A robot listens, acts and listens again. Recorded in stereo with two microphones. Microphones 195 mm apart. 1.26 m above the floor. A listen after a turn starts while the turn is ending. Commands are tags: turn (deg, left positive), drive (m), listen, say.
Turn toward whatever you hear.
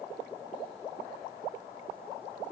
<listen/>
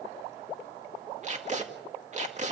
<turn deg="-40"/>
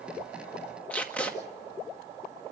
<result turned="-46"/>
<say>Facing the tape being pulled, 2 to 4 m away.</say>